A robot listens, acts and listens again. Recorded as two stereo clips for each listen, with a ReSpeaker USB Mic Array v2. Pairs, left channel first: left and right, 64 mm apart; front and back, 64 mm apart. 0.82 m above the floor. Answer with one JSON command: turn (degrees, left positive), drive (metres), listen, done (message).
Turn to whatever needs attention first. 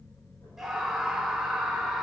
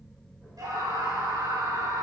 {"turn": -175}
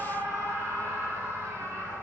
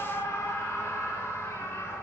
{"turn": -45}
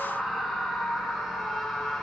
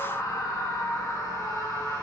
{"done": "Found it: a scream, straight ahead, over 4 m away."}